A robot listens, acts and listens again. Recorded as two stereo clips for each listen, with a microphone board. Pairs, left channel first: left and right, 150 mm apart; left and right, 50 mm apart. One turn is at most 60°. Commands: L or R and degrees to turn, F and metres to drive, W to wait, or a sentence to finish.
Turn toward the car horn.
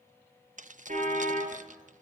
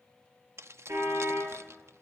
R55
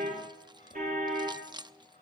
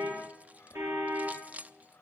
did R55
R60
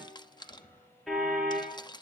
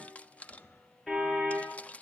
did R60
Facing the car horn, over 4 m away.